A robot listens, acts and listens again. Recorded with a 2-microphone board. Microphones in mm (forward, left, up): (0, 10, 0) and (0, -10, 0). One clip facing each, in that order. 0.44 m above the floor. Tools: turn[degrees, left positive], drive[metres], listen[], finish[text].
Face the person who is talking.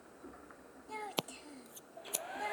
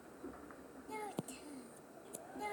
Thought: The child speaking: about 15° left or 165° left.
Action: turn[15]
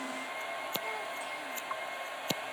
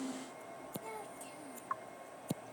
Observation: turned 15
Action: listen[]
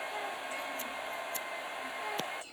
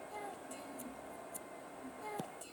Action: listen[]
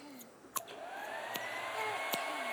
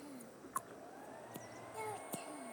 Thought: So it is at 150° left.
Action: turn[150]
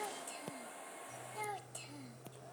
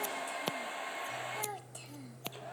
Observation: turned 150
Action: finish[Facing the child speaking.]